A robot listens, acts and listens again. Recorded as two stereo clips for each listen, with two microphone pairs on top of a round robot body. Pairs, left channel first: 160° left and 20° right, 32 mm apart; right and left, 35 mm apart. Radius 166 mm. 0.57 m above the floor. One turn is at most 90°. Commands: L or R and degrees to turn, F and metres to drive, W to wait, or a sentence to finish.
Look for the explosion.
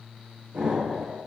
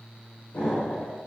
R55
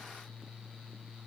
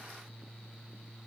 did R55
Facing where the explosion came from. I can't hear it now.